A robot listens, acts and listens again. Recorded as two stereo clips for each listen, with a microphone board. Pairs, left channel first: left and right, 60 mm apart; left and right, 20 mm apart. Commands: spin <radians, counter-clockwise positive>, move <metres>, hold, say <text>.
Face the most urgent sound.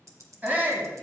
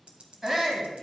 spin -0.52
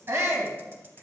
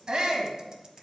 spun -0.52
spin -2.01
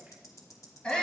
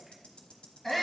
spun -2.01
spin 0.35
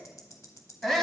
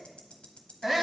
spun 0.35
say Facing the shout.